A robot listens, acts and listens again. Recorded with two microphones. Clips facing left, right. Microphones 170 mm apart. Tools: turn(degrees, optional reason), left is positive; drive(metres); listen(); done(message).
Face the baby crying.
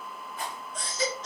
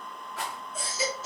turn(degrees=-30)
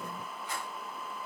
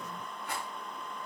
listen()
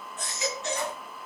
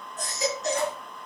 turn(degrees=-140, reason="So it is at 140° right.")
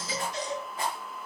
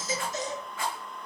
turn(degrees=-45, reason="The baby crying is now 45° right.")
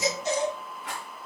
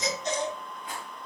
turn(degrees=10, reason="The baby crying is now 10° left.")
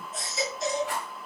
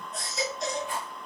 done("Found it: a baby crying, straight ahead.")